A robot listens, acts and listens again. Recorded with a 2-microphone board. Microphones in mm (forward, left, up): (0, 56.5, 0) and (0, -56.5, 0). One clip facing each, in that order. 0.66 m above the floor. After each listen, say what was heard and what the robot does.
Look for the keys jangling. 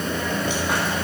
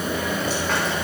Keep listening.
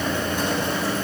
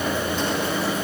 Keep listening.
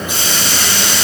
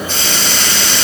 I can't make out keys jangling, only a hiss.